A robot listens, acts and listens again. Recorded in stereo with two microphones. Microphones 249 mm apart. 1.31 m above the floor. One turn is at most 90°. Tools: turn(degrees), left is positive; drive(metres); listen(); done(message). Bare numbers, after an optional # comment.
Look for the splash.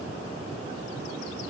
listen()
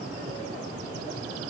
listen()
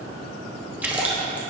turn(-30)
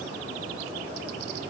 listen()
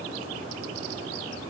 done("I heard a splash, but can't make it out now. It was about 25° left or 145° right.")